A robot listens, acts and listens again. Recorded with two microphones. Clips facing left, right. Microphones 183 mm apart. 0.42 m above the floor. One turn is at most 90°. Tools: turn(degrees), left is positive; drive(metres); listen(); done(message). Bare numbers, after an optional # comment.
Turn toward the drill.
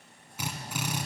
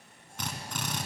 turn(30)
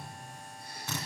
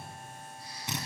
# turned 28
# So it is at 20° right.
turn(-20)
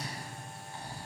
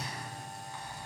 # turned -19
listen()
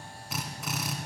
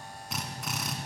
done("Facing the drill.")